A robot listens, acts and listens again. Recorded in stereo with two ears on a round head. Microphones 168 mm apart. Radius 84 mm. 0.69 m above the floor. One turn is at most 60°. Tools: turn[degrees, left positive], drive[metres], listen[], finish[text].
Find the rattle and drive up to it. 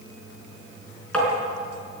Action: listen[]
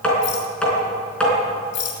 Thought: The rattle: about 65° left or 115° left.
Action: turn[60]
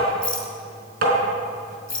Action: drive[1.0]
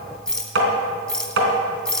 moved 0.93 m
Action: drive[1.0]
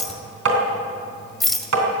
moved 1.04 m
Action: drive[1.0]
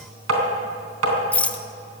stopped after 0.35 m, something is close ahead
Thought: The rattle is now 10° left.
Action: turn[10]
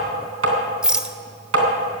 Action: finish[I am next to the rattle.]